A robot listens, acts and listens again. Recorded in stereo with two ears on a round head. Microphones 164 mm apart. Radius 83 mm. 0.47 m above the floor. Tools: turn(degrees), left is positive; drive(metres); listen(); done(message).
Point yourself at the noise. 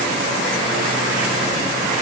listen()
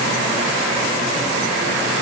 listen()
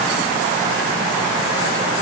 done("I can't make out anything.")